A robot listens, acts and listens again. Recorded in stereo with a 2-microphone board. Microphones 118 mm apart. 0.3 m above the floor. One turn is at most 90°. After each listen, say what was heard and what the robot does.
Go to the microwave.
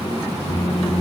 The microwave: about 75° left or 105° left. Turn 75° left.
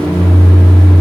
So it is at 10° left. Turn 10° left.
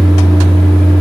Drive 1.0 m forward.
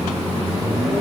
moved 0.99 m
Drive 1.0 m forward.
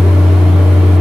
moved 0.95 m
Drive 1.0 m forward.
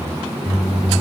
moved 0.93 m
Keep listening.
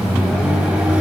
Keep listening.
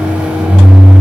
The microwave is now 10° right. Turn 10° right.
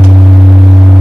Drive 1.0 m forward.
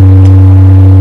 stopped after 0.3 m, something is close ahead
I am next to the microwave.